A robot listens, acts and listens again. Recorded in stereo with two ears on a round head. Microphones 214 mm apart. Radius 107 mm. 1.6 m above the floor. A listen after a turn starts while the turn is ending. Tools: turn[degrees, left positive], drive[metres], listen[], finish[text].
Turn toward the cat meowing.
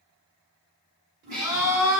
Thought: The cat meowing: about 45° right or 135° right.
Action: turn[-45]
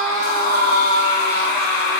Action: listen[]
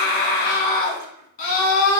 Action: listen[]
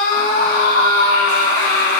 Action: finish[I heard a cat meowing, but can't make it out now. It was about straight ahead or 90° right.]